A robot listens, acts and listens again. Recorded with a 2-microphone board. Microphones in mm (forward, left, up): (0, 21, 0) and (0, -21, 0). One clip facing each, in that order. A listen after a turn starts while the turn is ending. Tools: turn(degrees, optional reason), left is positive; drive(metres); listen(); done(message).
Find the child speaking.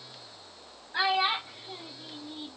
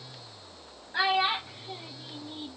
turn(degrees=-30)
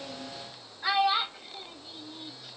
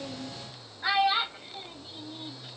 turn(degrees=-30)
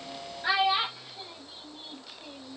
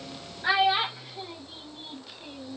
turn(degrees=-25, reason="The child speaking: about 25° right or 155° right.")
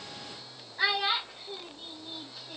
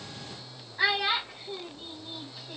turn(degrees=-30)
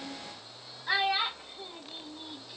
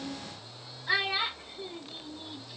turn(degrees=20, reason="So it is at 20° left.")
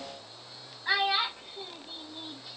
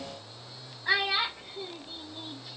turn(degrees=10, reason="The child speaking is now 10° left.")
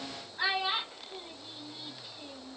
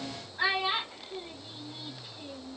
done("Facing the child speaking, 1 to 2 m away.")